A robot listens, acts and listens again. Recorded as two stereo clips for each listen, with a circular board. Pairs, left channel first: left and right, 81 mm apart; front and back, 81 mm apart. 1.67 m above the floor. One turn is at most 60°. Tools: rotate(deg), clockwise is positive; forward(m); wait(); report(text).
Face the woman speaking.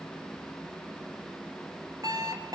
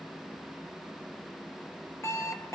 wait()
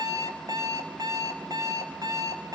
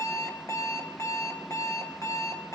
wait()
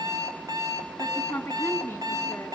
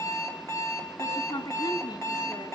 rotate(-25)
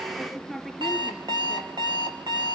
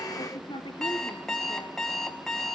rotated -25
report("Found it: a woman speaking, straight ahead.")